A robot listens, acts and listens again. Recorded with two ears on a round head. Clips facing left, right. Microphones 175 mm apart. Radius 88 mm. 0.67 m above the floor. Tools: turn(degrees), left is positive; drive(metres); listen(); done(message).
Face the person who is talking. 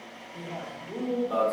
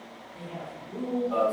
turn(degrees=50)
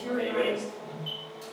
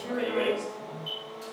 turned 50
turn(degrees=65)
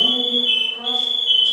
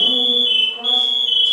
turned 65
listen()
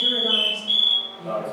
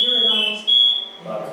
listen()
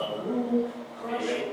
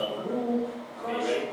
turn(degrees=15)
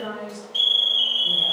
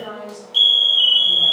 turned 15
done("Found it: a man speaking, straight ahead.")